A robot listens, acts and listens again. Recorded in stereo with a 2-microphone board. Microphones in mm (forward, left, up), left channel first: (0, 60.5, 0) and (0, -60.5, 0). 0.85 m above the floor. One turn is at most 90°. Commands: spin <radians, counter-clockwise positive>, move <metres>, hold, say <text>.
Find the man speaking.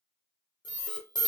hold
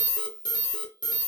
hold
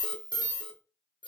say I can't make out a man speaking to turn to.